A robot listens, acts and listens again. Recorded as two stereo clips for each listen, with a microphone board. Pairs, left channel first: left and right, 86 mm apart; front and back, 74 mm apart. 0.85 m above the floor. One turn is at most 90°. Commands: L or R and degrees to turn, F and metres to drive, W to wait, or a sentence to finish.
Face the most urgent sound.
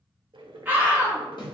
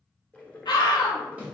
R20
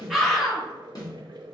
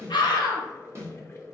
Facing the scream, 1 to 2 m away.